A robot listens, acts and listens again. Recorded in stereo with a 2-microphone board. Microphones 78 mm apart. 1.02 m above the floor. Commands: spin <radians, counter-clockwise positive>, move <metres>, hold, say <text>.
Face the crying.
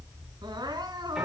spin -1.22
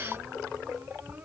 hold
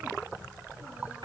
hold
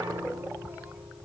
say I heard crying, but can't make it out now. It was about straight ahead or 40° right.